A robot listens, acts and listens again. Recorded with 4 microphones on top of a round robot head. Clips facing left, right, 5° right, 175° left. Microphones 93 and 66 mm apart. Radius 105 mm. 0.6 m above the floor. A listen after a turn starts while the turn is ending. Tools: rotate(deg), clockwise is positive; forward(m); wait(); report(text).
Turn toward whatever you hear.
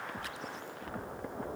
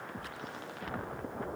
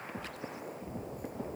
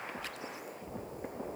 wait()
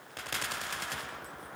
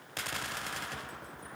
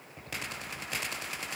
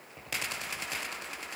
wait()
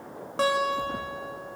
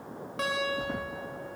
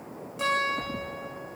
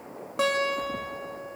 rotate(-145)
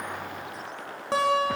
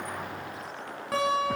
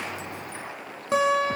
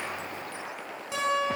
rotate(-25)
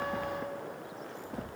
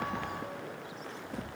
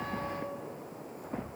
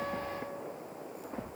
wait()
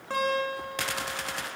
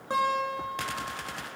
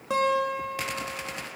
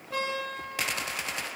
rotate(15)
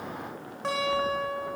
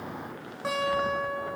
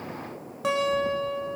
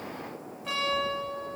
report("Found it: a guitar, straight ahead, over 4 m away.")